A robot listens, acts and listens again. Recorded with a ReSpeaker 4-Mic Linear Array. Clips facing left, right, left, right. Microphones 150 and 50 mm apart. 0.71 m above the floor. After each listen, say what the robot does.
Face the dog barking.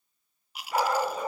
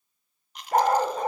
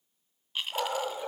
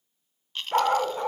Turn 50° right.
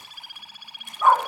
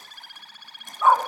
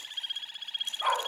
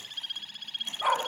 Found it: a dog barking, straight ahead.